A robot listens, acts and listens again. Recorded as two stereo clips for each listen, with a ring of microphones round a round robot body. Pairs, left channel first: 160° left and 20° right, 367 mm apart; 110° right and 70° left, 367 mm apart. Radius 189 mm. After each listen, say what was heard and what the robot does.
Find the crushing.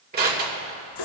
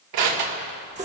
The crushing: 40° left. Turn 40° left.
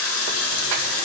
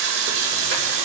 Keep listening.
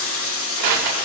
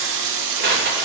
Facing the crushing.